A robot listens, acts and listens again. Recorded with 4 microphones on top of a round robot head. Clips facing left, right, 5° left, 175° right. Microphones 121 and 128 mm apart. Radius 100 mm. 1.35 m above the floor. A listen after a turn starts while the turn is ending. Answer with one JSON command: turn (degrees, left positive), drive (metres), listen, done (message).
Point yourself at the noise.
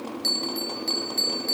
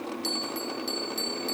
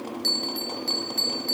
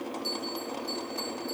{"done": "Facing the bell, under 1 m away."}